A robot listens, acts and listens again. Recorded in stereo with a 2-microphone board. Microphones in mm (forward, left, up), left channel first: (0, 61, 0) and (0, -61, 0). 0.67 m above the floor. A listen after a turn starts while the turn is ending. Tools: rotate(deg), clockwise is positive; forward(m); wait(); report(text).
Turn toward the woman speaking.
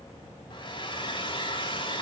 wait()
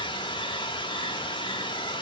wait()
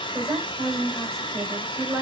rotate(20)
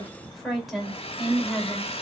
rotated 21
report("Facing the woman speaking, 2 to 4 m away.")